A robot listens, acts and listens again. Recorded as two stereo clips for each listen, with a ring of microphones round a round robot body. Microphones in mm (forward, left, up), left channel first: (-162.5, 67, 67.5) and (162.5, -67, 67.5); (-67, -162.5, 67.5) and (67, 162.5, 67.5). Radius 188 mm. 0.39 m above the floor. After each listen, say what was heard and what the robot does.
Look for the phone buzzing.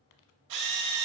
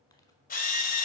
Keep listening.
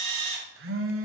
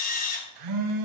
The phone buzzing: 35° left. Turn 35° left.
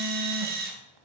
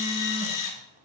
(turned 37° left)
Keep listening.
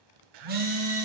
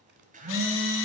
Found it: a phone buzzing, straight ahead, 1 to 2 m away.